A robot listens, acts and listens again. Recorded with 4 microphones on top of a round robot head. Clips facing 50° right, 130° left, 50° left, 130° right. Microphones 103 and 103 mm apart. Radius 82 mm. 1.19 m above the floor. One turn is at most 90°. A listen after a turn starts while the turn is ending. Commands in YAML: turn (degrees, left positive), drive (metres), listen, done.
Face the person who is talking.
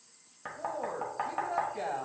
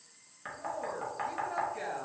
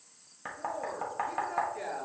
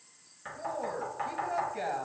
turn: -90
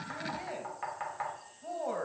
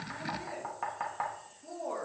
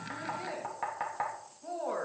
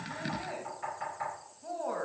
turn: -35
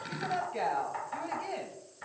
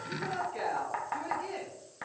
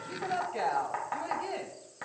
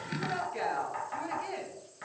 done: "Facing the woman speaking."